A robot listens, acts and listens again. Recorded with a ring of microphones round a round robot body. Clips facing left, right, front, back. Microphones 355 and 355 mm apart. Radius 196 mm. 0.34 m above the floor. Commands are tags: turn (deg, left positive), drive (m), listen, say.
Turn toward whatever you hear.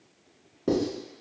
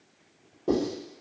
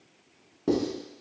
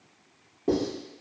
<turn deg="40"/>
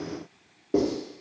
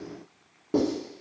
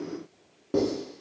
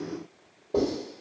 <turn deg="-20"/>
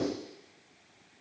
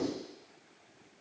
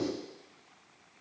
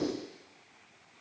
<listen/>
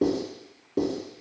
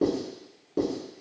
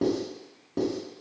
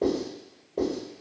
<say>Facing the writing, 1 to 2 m away.</say>